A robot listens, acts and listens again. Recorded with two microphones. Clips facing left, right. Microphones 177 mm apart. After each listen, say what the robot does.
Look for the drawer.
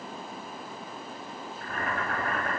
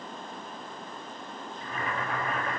Keep listening.
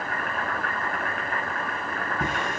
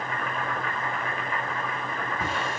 Turn 20° left.
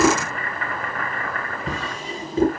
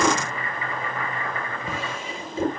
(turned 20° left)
Turn 140° left.
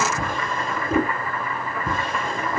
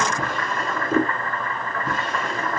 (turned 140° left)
Turn 50° left.
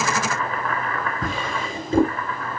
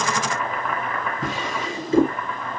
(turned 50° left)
Turn 25° left.
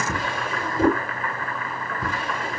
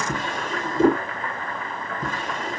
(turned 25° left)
Facing the drawer, over 4 m away.